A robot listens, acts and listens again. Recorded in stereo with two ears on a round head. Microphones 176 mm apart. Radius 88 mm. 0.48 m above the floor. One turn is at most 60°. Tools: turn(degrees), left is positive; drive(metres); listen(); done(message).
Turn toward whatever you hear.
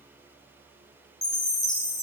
turn(degrees=20)
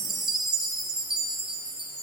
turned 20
done("Facing the chime, 1 to 2 m away.")